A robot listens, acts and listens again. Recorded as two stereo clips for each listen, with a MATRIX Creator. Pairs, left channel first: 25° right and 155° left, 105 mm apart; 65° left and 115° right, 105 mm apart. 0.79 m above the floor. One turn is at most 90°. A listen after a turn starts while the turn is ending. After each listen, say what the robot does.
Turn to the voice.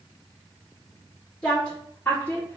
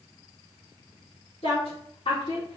Turn 45° left.
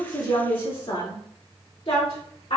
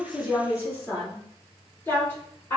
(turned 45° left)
Found it: a woman speaking, straight ahead.